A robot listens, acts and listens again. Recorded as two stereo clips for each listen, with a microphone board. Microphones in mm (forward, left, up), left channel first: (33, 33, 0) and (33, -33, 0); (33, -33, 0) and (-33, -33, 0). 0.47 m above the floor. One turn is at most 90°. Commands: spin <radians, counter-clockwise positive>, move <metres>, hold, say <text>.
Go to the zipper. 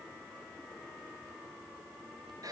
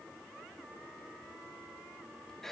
hold
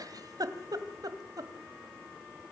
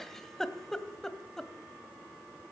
hold
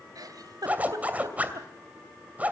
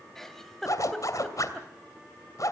spin -0.44
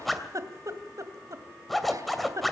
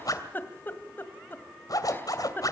move 1.0
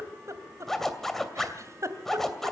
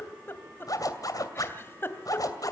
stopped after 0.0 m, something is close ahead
say Blocked. The zipper is further on, straight ahead.